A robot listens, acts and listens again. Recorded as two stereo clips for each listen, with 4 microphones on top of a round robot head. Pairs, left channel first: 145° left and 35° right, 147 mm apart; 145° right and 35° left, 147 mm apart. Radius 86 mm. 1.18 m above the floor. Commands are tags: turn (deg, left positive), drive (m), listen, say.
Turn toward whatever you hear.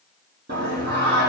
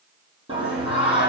<turn deg="-20"/>
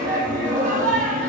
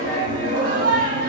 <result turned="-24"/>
<say>Facing the singing, over 4 m away.</say>